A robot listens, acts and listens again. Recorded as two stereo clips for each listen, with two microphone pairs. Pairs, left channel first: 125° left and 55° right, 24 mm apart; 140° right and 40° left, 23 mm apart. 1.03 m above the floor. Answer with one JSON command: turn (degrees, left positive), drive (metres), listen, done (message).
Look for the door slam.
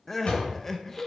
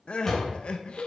{"turn": 145}
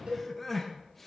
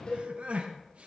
{"done": "Facing where the door slam came from. I can't hear it now."}